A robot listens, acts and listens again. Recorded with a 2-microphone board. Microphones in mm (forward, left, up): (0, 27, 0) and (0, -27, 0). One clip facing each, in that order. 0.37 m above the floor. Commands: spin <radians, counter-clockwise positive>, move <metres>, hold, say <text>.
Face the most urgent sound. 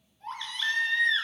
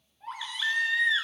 spin -0.52
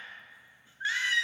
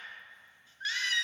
spin 0.35
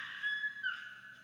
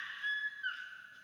say Facing the baby crying, 1 to 2 m away.